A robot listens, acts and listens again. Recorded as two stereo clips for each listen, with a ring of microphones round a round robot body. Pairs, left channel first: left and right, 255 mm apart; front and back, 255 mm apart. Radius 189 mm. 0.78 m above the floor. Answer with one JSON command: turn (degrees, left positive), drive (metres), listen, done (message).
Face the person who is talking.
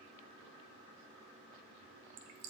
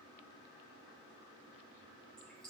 {"listen": true}
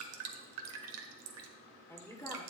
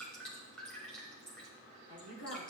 {"turn": 10}
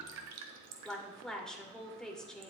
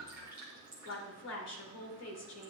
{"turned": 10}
{"done": "Found it: a woman speaking, straight ahead."}